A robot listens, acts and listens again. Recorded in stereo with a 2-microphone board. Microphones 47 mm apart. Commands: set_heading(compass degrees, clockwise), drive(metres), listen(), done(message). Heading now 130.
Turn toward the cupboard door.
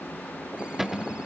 set_heading(160)
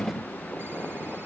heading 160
set_heading(135)
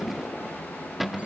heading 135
done("Found it: a cupboard door, straight ahead.")